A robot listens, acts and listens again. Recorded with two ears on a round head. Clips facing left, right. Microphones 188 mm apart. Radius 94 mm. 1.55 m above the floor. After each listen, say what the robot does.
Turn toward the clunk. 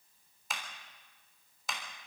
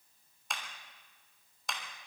Keep listening.
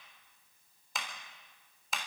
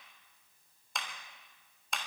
Keep listening.
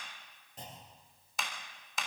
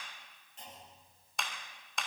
Turn 35° left.
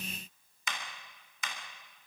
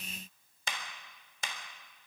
Keep listening.
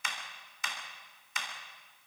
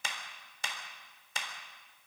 I heard a clunk, but can't make it out now. It was about straight ahead or 110° left.